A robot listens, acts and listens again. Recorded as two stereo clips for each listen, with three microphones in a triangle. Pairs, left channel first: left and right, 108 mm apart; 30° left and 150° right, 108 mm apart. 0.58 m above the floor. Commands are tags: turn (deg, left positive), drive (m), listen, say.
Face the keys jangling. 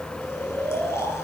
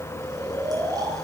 <listen/>
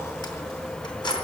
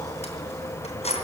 <turn deg="45"/>
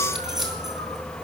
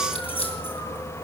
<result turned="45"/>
<say>Facing the keys jangling.</say>